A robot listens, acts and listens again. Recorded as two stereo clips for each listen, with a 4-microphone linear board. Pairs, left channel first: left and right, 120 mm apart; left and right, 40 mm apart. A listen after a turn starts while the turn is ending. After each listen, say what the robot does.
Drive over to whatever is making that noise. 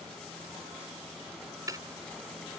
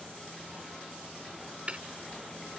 Turn 30° right.
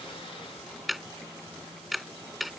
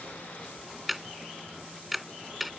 Drive 1.0 m forward.
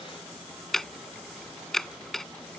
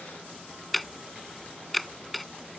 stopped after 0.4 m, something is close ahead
Something is in my way. I am facing the ticking but have not reached it.